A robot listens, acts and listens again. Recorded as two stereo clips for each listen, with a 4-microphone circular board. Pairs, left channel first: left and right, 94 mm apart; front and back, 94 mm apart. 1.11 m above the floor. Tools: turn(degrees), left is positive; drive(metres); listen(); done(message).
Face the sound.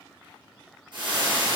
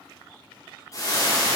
turn(degrees=-55)
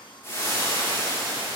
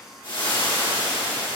turn(degrees=25)
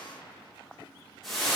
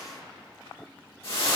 done("Found it: frying, straight ahead.")